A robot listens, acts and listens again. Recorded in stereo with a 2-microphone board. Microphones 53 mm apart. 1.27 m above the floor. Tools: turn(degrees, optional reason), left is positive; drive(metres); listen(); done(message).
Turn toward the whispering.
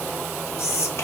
turn(degrees=55, reason="The whispering: about 55° left or 125° left.")
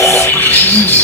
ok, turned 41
listen()
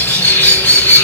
listen()
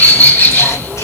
done("I heard whispering, but can't make it out now. It was about 15° left or 85° left.")